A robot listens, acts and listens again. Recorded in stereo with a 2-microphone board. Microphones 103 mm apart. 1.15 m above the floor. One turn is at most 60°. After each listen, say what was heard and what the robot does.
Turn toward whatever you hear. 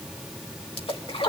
The splash: about 60° left or 120° left. Turn 60° left.
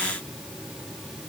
Keep listening.
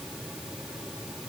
I heard a splash, but can't make it out now. It was about straight ahead or 60° left.